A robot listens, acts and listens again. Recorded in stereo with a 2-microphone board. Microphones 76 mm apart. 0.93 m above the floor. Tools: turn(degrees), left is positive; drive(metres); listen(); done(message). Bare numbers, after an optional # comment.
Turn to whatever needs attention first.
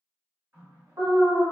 # The alarm: about 55° right or 125° right.
turn(-55)
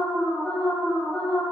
# So it is at 10° right.
turn(-10)
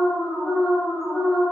done("Facing the alarm, under 1 m away.")